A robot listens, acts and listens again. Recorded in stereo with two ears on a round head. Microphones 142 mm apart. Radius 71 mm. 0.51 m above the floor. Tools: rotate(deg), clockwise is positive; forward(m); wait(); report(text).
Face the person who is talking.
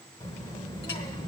rotate(-25)
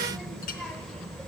report("Found it: a child speaking, straight ahead, 1 to 2 m away.")